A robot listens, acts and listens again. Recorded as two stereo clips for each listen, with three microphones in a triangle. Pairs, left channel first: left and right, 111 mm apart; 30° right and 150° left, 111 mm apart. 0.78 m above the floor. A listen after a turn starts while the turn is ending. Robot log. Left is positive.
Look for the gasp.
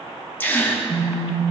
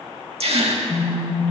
note: The gasp: 160° left.
cmd yaw +160
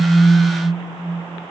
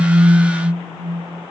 end: Facing where the gasp came from. I can't hear it now.